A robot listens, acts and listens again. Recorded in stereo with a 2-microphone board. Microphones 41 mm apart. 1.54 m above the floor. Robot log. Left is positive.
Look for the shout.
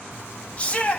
note: The shout: about 30° left or 150° left.
cmd yaw +30
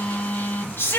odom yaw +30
note: So it is at 115° left.
cmd yaw +115
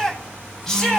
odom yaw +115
note: The shout is now 10° left.
cmd yaw +10
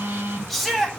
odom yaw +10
end: Found it: a shout, straight ahead.